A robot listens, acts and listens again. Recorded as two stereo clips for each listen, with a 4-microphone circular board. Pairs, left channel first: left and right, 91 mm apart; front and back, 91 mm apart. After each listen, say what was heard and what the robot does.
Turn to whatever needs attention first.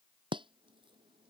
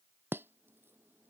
Keep listening.
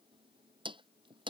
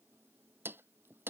Keep listening.
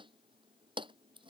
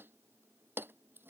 I can't make out anything urgent, only chopping.